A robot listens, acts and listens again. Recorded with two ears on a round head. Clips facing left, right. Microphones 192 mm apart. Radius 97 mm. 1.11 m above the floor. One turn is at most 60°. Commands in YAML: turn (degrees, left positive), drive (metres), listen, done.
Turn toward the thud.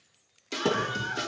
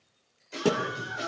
turn: -30
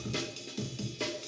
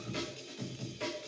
listen: true
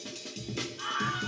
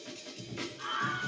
done: "I heard a thud, but can't make it out now. It was about 25° left or 145° right."